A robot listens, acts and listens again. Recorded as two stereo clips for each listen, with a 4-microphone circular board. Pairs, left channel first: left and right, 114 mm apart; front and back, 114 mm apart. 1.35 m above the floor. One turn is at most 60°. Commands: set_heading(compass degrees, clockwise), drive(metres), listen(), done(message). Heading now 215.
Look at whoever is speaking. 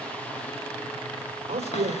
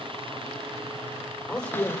set_heading(275)
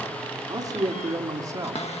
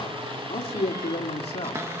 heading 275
set_heading(305)
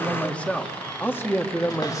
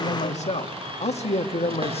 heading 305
set_heading(280)
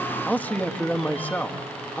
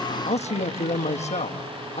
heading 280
set_heading(265)
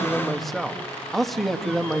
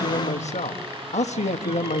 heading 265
done("Facing the man speaking.")